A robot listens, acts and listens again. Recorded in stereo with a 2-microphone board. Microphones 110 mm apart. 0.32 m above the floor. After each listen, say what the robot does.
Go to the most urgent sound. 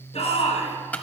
Turn 70° left.
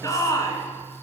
Turn 35° left.
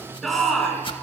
Drive 1.0 m forward.
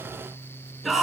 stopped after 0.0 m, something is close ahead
Blocked. The shout is further on, straight ahead.